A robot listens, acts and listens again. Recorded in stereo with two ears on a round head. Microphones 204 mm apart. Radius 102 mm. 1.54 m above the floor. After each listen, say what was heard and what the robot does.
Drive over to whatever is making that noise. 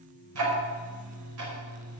Turn 90° right.
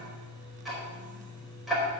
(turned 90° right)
Drive 1.0 m forward.
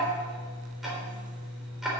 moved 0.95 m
Drive 1.0 m forward.
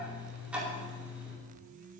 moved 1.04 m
Drive 1.0 m forward.
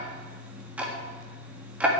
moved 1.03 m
Drive 1.0 m forward.
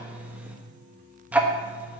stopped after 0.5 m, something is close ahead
The ticking is now 10° right. Turn 10° right.
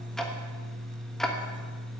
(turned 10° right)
I am next to the ticking.